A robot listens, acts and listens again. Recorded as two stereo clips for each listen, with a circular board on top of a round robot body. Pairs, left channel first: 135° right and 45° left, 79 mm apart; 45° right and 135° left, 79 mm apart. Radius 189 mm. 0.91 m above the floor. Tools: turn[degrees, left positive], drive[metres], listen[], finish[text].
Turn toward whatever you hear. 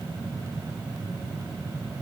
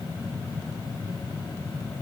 Action: listen[]
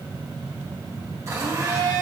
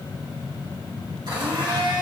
Thought: The blender: 100° left.
Action: turn[100]
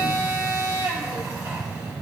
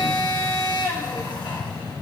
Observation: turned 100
Thought: The blender is now 10° right.
Action: turn[-10]
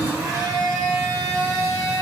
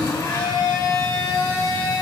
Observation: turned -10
Action: finish[Facing the blender, 1 to 2 m away.]